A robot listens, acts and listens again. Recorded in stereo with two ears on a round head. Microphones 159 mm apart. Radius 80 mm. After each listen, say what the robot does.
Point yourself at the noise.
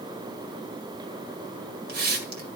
Turn 55° right.
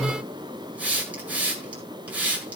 Turn 10° right.
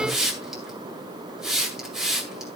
Facing the hiss, 2 to 4 m away.